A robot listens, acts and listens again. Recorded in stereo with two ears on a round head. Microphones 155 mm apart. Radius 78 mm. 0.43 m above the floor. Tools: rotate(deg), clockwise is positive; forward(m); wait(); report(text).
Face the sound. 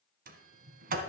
rotate(55)
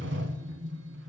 rotate(70)
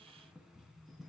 report("Found it: a sliding door, straight ahead, 1 to 2 m away.")